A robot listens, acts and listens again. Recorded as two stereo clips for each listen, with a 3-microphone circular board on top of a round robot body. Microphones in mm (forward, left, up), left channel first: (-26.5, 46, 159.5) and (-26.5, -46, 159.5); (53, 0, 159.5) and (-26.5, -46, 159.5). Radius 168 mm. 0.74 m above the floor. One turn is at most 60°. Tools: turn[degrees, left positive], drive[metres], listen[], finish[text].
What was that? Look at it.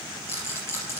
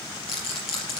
Thought: The rattle: 25° left.
Action: turn[25]
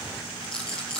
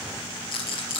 Action: finish[Facing the rattle, over 4 m away.]